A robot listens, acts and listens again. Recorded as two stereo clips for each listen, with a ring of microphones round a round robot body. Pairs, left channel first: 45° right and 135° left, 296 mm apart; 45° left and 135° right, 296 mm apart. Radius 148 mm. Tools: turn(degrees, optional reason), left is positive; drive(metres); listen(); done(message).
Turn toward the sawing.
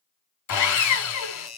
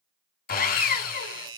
turn(degrees=-15, reason="The sawing: 15° right.")
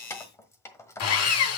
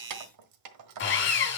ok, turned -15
done("Found it: sawing, straight ahead, 2 to 4 m away.")